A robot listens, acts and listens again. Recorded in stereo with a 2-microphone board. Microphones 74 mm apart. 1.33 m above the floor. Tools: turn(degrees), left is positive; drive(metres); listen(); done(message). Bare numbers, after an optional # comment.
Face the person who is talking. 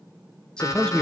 turn(30)
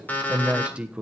# So it is at 20° right.
turn(-20)
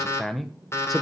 done("Found it: a man speaking, straight ahead, 1 to 2 m away.")